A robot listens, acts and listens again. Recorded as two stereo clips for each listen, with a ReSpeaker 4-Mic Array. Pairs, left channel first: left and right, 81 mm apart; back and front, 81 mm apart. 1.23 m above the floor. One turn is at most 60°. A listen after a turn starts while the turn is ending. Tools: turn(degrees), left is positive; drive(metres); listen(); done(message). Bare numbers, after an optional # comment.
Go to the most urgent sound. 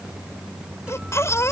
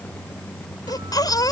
# The baby crying: 140° left.
turn(60)
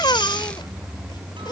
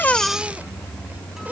# The baby crying is now 70° left.
turn(60)
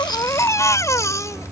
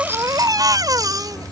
# The baby crying is now 40° left.
turn(40)
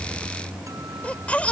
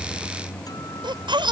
# The baby crying is now 15° left.
turn(15)
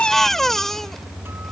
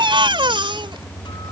drive(1.0)
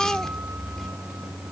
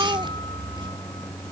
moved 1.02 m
drive(1.0)
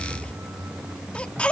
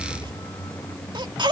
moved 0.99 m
# The baby crying is now 15° left.
turn(15)
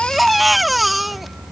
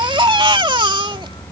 drive(1.0)
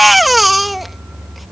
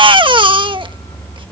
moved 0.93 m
drive(1.0)
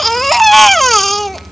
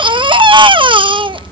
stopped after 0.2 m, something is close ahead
done("Arrived at the baby crying, straight ahead.")